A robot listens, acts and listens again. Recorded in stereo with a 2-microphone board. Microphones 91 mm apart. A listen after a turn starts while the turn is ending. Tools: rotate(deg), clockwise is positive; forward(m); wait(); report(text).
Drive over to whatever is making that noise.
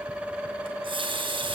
rotate(75)
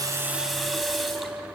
forward(1.0)
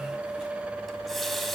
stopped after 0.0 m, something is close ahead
report("Something is in my way. I am facing the running tap but have not reached it.")